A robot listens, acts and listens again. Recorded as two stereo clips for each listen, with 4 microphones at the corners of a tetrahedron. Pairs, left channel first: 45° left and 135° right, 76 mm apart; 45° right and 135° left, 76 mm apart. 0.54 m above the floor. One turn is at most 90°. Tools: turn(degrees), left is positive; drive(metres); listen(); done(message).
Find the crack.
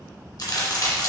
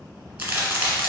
turn(degrees=65)
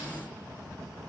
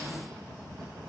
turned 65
done("I heard a crack from this way, but can't make it out now.")